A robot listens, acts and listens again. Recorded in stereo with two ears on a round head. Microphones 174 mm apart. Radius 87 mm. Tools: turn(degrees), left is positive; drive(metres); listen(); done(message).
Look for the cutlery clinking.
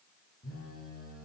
listen()
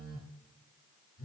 listen()
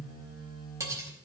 turn(degrees=-30)
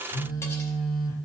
listen()
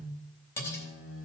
turn(degrees=15)
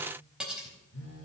done("Facing the cutlery clinking.")